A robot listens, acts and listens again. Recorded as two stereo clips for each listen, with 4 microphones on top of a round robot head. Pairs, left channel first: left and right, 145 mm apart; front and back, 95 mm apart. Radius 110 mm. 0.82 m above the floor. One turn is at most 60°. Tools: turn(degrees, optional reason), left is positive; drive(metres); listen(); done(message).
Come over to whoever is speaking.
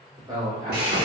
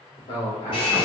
turn(degrees=-25, reason="The man speaking: 25° right.")
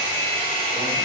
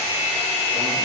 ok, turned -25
listen()
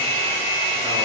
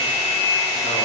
listen()
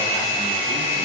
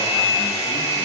done("Facing where the man speaking came from. I can't hear it now. I did not reach it.")